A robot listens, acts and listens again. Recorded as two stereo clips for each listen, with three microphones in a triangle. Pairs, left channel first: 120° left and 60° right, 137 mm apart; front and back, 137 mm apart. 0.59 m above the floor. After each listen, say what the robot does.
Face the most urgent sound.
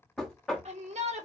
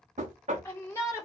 Turn 65° right.
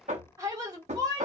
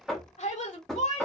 Facing the shout.